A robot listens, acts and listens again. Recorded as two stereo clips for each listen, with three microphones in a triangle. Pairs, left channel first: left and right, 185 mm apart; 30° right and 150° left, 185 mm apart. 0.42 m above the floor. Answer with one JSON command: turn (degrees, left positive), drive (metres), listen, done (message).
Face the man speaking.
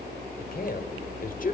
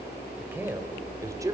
{"turn": 85}
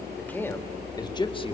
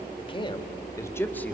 {"turn": 40}
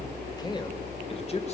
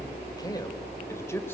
{"turn": 45}
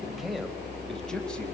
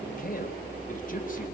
{"done": "Facing the man speaking, 2 to 4 m away."}